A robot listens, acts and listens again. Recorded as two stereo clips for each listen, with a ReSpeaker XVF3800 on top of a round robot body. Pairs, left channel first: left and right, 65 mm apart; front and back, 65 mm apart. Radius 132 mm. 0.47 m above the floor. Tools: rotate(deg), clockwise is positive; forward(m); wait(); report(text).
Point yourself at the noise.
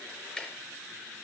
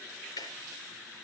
rotate(-10)
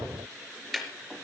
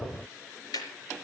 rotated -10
report("Facing the ticking.")